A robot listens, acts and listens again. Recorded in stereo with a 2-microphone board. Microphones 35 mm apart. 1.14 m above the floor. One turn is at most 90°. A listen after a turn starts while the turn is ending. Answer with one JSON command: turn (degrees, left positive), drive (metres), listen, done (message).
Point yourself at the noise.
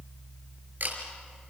{"turn": -60}
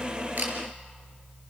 {"listen": true}
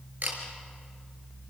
{"turn": -55}
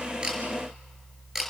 {"turn": -10}
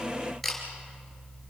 {"done": "Facing the camera shutter."}